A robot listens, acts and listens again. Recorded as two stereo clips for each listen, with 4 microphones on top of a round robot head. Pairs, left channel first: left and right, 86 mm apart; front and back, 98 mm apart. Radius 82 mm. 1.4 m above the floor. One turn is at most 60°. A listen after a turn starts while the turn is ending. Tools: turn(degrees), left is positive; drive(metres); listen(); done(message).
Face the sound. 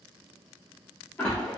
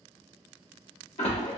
turn(degrees=10)
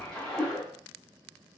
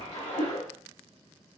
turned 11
done("Facing the splash.")